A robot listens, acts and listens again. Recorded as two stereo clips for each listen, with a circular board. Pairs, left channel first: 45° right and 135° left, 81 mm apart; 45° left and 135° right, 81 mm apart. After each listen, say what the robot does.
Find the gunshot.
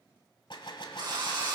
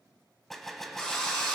Turn 45° right.
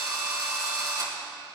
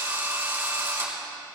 I heard a gunshot from this way, but can't make it out now.